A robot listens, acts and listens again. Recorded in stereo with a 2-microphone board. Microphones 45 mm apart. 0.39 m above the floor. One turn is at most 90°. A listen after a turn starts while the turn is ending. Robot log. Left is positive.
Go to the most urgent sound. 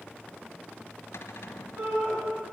note: The shout: about 50° right or 130° right.
cmd yaw -50
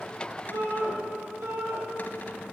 note: So it is at 80° right.
cmd yaw -80
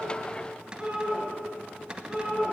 note: The shout is now 15° right.
cmd yaw -15
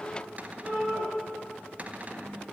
cmd fwd 1.0
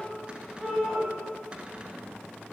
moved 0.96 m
cmd fwd 1.0
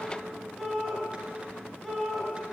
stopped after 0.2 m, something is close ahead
end: Blocked. The shout is further on, straight ahead.